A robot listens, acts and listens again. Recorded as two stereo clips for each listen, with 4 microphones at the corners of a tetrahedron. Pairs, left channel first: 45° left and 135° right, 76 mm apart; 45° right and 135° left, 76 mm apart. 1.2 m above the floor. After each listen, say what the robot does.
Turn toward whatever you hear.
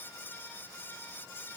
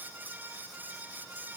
Keep listening.
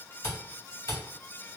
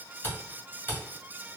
Turn 10° left.
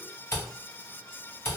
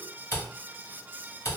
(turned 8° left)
Facing the camera shutter, 1 to 2 m away.